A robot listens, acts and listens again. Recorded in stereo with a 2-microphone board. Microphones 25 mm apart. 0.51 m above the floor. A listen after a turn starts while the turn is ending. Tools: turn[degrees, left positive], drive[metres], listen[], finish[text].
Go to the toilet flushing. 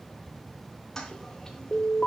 Thought: The toilet flushing: about 20° left or 160° left.
Action: turn[20]
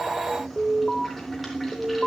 Action: drive[1.0]
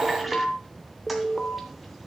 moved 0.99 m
Action: listen[]
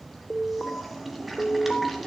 Action: drive[1.0]
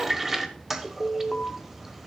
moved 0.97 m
Thought: The toilet flushing is now 10° right.
Action: turn[-10]
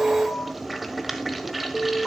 Action: drive[1.0]
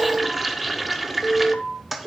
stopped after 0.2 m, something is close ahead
Action: finish[I am next to the toilet flushing.]